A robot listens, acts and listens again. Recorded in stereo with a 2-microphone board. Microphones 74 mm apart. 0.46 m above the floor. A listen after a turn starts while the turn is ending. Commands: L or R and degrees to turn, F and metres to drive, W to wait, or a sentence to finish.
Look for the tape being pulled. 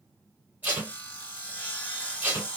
R25
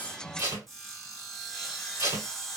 R130
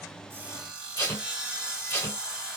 L35
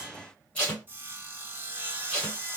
L20
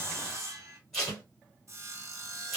Facing the tape being pulled, 2 to 4 m away.